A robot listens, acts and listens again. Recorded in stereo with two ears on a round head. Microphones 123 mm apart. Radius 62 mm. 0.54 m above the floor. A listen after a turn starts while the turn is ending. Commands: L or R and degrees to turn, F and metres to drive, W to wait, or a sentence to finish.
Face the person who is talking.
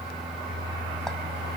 W
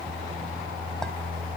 W
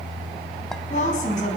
L60
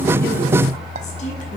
W
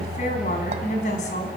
L60
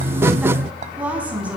R10
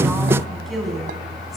Found it: a woman speaking, straight ahead.